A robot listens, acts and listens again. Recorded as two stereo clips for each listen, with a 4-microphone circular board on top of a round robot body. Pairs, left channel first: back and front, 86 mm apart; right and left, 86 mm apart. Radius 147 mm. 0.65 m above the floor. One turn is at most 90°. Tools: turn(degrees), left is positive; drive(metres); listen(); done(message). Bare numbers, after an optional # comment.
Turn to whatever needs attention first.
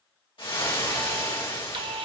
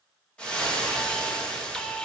done("Facing the alarm.")